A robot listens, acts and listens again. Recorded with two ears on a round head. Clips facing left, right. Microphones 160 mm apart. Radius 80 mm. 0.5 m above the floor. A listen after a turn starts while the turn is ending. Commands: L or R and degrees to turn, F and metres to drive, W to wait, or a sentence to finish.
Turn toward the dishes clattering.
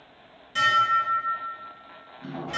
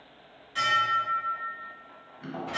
L55
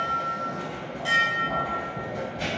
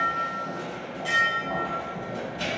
Found it: dishes clattering, straight ahead.